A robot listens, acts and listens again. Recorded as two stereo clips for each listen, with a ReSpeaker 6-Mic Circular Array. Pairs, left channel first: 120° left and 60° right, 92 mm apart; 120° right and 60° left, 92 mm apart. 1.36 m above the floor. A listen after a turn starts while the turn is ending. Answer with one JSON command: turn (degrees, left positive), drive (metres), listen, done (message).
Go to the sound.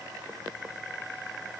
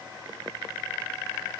{"listen": true}
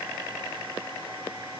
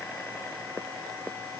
{"listen": true}
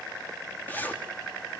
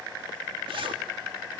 {"turn": 50}
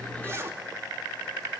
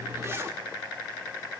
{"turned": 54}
{"drive": 1.0}
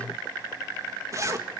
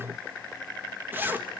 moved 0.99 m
{"drive": 1.0}
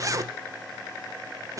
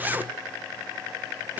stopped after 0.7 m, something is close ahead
{"turn": -10}
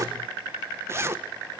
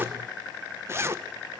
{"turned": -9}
{"done": "Arrived at the zipper, straight ahead."}